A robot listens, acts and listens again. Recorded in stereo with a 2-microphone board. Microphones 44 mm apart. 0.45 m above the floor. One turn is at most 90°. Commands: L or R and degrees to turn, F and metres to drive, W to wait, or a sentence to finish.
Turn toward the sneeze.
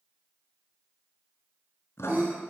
R45
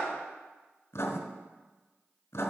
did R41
W
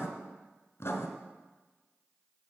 I heard a sneeze, but can't make it out now. It was about 5° right or 95° right.